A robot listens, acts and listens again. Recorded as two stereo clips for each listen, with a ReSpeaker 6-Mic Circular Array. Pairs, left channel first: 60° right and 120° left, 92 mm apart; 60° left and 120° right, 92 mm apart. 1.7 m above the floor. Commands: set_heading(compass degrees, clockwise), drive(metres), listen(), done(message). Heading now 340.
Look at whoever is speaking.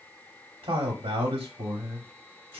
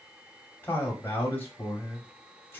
set_heading(210)
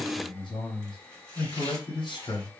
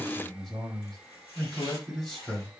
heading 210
set_heading(235)
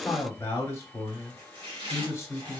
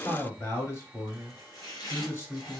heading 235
done("Facing the man speaking, 1 to 2 m away.")